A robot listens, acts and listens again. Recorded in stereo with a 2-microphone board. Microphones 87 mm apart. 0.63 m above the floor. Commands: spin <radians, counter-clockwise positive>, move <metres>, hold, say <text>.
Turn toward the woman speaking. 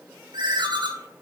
hold
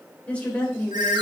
spin 0.35
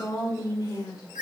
spin 2.36
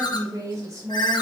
spin -0.70
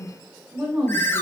spin -0.17
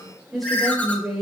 say Facing the woman speaking.